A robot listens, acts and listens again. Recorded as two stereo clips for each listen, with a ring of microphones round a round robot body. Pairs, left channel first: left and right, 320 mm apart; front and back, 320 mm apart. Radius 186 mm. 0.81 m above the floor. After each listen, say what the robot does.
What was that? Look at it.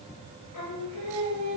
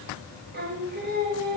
Turn 120° left.
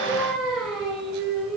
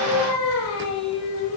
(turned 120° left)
Facing the singing, over 4 m away.